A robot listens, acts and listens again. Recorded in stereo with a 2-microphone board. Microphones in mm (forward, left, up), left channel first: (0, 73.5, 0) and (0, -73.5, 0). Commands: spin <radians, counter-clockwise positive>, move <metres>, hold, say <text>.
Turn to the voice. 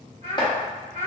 spin -0.79
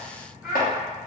say Facing the child speaking, 1 to 2 m away.